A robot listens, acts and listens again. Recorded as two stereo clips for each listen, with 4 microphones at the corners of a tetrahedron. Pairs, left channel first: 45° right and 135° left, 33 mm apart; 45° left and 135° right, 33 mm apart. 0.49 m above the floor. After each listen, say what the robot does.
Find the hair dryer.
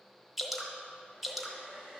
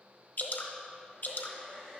Turn 175° left.
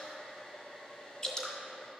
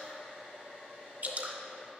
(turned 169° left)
Found it: a hair dryer, straight ahead, 1 to 2 m away.